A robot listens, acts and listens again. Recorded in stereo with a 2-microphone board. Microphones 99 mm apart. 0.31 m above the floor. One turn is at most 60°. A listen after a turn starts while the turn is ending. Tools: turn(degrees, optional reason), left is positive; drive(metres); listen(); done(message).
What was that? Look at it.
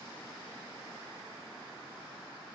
listen()
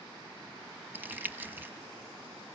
turn(degrees=-20, reason="The crumpling: about 20° right or 160° right.")
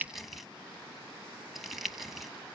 done("Found it: crumpling, straight ahead, 1 to 2 m away.")